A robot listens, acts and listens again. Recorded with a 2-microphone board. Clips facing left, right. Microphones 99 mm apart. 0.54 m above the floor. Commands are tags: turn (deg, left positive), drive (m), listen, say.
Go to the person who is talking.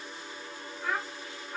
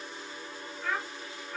<turn deg="15"/>
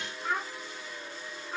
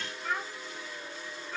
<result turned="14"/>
<turn deg="150"/>
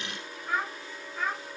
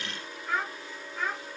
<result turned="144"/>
<drive m="1.0"/>
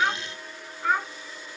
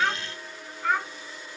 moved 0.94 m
<drive m="1.0"/>
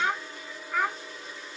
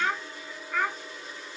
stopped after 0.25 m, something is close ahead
<say>Arrived at the child speaking, straight ahead.</say>